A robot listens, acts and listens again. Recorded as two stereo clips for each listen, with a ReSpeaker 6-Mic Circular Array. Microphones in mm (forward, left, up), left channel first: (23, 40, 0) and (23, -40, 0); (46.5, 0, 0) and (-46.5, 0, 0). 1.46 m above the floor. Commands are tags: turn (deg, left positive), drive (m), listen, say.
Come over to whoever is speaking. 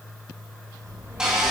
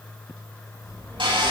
<turn deg="-50"/>
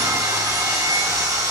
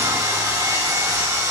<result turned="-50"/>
<listen/>
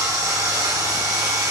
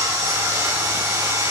<listen/>
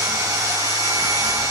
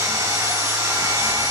<say>I heard a child speaking from this way, but can't make it out now. I did not reach it.</say>